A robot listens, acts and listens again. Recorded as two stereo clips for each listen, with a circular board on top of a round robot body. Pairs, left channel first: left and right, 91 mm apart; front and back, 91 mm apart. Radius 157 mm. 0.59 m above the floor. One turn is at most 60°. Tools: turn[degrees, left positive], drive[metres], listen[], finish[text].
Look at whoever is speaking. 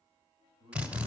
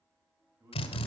Thought: The man speaking: 125° right.
Action: turn[-60]
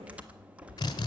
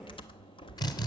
Thought: Nothing new. It was at 65° right.
Action: turn[-60]
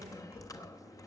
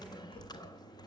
Action: listen[]
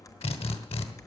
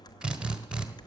Action: finish[Facing where the man speaking came from. I can't hear it now.]